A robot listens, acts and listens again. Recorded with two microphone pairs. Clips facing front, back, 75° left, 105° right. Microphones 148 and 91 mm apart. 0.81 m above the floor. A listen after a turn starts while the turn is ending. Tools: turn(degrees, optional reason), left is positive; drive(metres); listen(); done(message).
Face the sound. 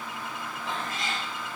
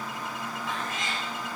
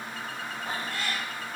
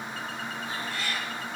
turn(degrees=55, reason="The cat meowing: 55° left.")
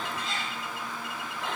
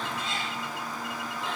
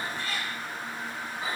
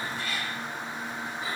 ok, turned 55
turn(degrees=20, reason="The cat meowing is now 20° left.")
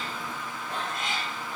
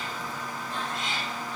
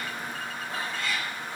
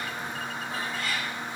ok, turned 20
turn(degrees=-25, reason="The cat meowing is now 25° right.")
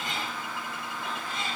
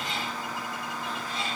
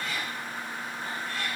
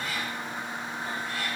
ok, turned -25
turn(degrees=-30, reason="The cat meowing is now 30° right.")
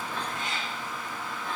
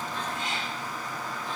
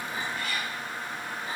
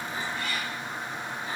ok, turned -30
turn(degrees=-10, reason="The cat meowing is now 10° right.")
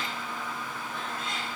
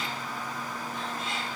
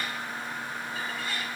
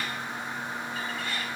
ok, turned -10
listen()
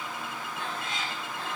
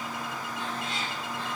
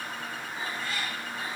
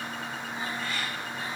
done("Facing the cat meowing, 2 to 4 m away.")